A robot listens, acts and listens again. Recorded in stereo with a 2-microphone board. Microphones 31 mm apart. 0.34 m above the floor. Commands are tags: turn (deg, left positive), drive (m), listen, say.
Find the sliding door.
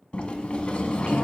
<turn deg="30"/>
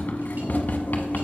<turn deg="115"/>
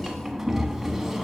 <say>Facing the sliding door.</say>